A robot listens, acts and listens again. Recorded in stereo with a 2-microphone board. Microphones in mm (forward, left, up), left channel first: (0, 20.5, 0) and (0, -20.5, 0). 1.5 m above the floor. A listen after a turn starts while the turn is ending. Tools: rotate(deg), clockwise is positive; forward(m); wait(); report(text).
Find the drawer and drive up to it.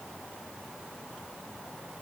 wait()
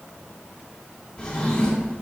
rotate(-20)
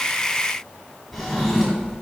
forward(1.0)
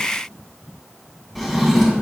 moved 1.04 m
forward(1.0)
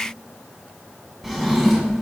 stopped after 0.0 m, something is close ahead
report("I am next to the drawer.")